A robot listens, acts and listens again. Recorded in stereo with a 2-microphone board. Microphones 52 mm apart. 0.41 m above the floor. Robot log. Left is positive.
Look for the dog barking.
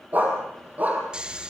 note: The dog barking: about 30° right or 150° right.
cmd yaw -30
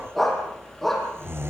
end: Found it: a dog barking, straight ahead.